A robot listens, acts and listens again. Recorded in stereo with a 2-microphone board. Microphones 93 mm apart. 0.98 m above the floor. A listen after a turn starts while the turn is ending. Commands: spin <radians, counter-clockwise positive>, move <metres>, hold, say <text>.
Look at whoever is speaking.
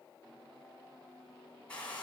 hold
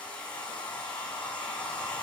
hold
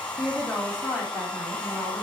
spin 0.52
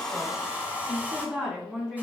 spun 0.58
spin -0.35
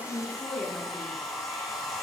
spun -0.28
say Found it: a woman speaking, straight ahead, 2 to 4 m away.